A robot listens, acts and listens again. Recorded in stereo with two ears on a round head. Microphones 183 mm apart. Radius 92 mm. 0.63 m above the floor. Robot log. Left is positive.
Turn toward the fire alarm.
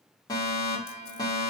note: The fire alarm: about 20° left or 160° left.
cmd yaw +20
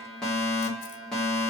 end: Facing the fire alarm.